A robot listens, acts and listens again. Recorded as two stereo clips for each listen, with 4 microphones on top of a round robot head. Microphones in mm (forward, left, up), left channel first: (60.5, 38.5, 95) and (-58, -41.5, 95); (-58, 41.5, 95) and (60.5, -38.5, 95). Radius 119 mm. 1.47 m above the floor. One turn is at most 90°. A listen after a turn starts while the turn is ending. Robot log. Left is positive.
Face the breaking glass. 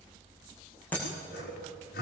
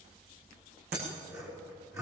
note: The breaking glass: 45° right.
cmd yaw -45
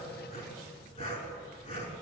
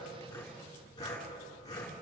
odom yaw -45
end: Facing where the breaking glass came from. I can't hear it now.